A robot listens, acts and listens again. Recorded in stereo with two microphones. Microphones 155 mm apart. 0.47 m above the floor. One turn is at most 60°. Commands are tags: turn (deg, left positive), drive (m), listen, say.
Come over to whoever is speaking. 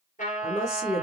<turn deg="20"/>
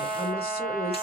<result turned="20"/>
<turn deg="60"/>
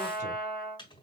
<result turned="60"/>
<turn deg="60"/>
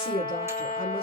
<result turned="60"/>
<turn deg="60"/>
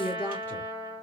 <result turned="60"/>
<turn deg="10"/>
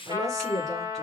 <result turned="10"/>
<drive m="1.0"/>
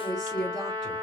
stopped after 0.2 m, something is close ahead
<say>Blocked. The woman speaking is further on, straight ahead.</say>